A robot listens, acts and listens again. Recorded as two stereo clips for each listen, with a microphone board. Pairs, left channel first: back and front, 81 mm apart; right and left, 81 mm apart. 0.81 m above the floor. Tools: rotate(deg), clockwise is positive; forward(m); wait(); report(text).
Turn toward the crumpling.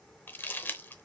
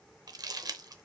rotate(-115)
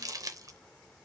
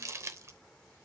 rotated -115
rotate(-40)
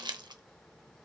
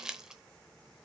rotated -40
rotate(-10)
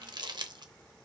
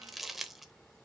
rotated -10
report("Found it: crumpling, straight ahead.")